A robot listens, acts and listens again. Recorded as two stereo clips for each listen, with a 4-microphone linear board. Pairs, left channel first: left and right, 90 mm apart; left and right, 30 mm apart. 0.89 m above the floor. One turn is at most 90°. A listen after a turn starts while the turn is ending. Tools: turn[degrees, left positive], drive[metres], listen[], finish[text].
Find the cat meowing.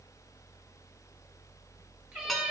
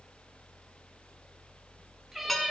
Thought: The cat meowing: about 15° right or 165° right.
Action: turn[-15]
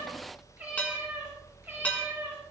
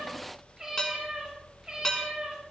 Thought: The cat meowing: about 30° right or 150° right.
Action: turn[-30]
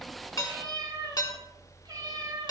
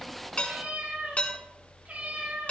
Thought: So it is at 125° right.
Action: turn[-90]
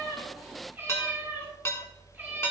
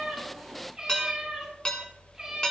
Thought: The cat meowing is now 15° right.
Action: turn[-15]
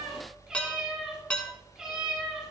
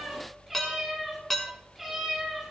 Action: finish[Facing the cat meowing.]